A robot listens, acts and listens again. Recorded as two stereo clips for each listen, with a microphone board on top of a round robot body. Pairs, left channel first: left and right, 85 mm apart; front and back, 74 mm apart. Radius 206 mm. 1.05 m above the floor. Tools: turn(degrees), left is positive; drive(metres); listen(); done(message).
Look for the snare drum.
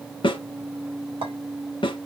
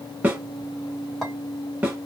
turn(degrees=110)
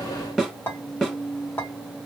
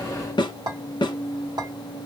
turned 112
done("Found it: a snare drum, straight ahead.")